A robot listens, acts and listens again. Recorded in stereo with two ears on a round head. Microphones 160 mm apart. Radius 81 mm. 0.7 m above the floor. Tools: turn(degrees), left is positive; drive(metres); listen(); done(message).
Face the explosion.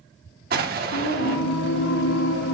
turn(degrees=-55)
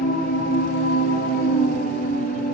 listen()
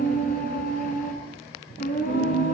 done("I heard an explosion, but can't make it out now. It was about straight ahead or 70° right.")